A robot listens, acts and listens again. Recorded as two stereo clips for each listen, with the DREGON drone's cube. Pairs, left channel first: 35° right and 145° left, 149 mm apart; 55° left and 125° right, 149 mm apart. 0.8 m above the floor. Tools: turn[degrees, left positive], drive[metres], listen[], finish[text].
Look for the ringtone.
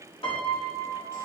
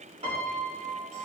Action: listen[]
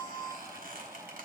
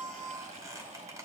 Action: listen[]
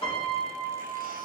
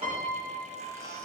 Action: finish[I can't make out a ringtone to turn to.]